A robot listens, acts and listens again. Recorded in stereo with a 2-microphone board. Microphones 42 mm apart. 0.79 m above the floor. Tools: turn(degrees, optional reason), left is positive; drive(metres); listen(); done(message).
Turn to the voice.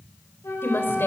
turn(degrees=55, reason="The woman speaking: about 55° left or 125° left.")
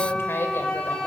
listen()
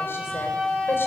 listen()
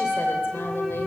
done("I heard a woman speaking, but can't make it out now. It was about straight ahead or 70° left.")